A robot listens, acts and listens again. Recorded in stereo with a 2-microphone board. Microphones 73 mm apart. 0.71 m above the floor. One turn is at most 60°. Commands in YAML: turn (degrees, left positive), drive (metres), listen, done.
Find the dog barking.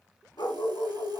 turn: 60
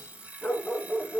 done: "Found it: a dog barking, straight ahead."